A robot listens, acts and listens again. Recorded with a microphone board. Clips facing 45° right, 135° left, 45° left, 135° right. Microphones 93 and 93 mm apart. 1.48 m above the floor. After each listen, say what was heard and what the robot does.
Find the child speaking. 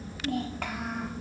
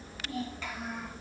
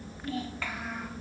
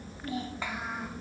The child speaking: 65° right. Turn 65° right.
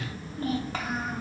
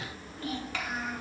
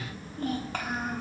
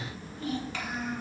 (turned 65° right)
Facing the child speaking.